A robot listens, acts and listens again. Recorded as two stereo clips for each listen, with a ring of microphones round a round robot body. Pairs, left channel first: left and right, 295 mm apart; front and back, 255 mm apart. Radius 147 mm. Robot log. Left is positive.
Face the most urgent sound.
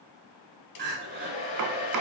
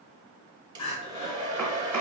note: The crying: 35° right.
cmd yaw -35
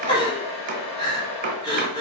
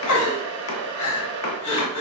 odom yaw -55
note: The crying is now 15° left.
cmd yaw +15
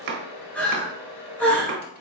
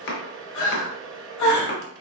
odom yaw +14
end: Facing the crying, 1 to 2 m away.